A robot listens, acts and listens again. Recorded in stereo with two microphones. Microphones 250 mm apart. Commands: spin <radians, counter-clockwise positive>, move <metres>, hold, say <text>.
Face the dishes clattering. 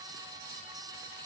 hold
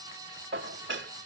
spin -0.87
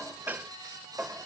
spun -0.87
spin -0.17
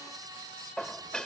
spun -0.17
say Found it: dishes clattering, straight ahead.